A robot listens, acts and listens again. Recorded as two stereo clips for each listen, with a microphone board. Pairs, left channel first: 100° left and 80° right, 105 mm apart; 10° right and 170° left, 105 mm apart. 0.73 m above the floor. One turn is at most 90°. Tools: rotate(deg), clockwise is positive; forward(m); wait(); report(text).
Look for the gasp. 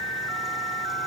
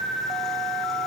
wait()
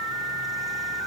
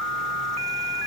wait()
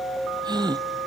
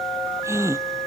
rotate(90)
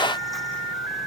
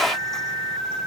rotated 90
rotate(35)
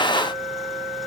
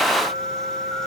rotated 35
report("I heard a gasp from this way, but can't make it out now.")